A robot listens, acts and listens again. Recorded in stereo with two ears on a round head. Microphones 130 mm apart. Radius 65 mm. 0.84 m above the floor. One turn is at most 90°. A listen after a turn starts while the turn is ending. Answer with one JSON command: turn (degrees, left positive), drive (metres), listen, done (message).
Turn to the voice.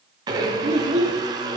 {"turn": -45}
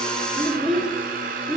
{"done": "Found it: a child speaking, straight ahead."}